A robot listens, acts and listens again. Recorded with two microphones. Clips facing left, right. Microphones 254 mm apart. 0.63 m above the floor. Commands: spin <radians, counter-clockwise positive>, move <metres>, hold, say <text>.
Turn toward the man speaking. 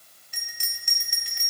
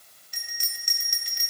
hold
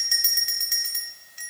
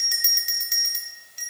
hold
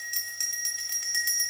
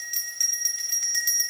say I can't make out a man speaking, only a bell.